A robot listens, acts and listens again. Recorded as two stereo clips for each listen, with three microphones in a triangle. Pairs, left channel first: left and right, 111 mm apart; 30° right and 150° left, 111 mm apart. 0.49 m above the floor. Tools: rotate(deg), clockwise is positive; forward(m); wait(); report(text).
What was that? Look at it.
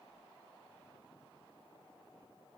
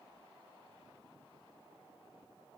wait()
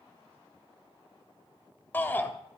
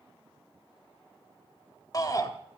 rotate(-20)
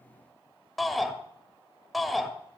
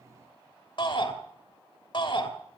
report("Facing the shout.")